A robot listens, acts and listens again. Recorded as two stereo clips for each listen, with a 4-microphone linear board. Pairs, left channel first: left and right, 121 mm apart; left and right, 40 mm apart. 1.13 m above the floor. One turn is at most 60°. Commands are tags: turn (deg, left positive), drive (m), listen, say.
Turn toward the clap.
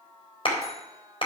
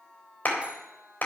<turn deg="50"/>
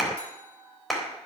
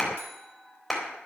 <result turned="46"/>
<say>Facing the clap.</say>